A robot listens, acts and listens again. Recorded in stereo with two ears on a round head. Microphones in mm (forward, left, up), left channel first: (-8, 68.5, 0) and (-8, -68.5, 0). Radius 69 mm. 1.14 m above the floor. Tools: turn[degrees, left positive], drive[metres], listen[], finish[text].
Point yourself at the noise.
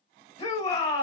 Thought: The shout: about 25° left or 155° left.
Action: turn[25]
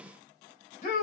Thought: So it is at 130° left.
Action: turn[130]
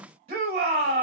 Thought: The shout is now 50° right.
Action: turn[-50]
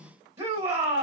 Thought: The shout is now 20° right.
Action: turn[-20]
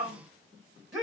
Action: finish[Found it: a shout, straight ahead, 1 to 2 m away.]